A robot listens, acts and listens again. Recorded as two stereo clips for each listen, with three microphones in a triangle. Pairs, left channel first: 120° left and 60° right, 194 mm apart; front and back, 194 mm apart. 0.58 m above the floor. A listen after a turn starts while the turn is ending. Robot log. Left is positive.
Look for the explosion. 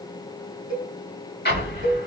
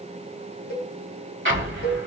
note: The explosion: 160° left.
cmd yaw +160
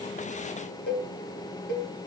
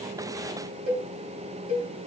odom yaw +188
note: Nothing new. It was at 30° right.
cmd yaw -30
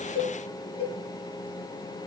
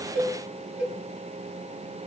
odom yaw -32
end: Facing where the explosion came from. I can't hear it now.